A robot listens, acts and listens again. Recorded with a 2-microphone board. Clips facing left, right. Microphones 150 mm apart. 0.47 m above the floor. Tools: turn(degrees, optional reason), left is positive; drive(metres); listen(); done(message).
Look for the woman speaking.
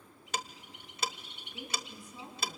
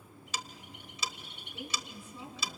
turn(degrees=15, reason="The woman speaking: about 15° left or 165° left.")
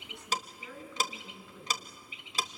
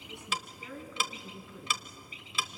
turn(degrees=-30)
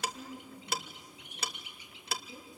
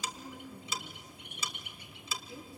turn(degrees=20, reason="So it is at 20° left.")
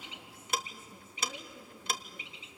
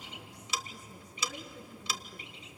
done("Found it: a woman speaking, straight ahead, over 4 m away.")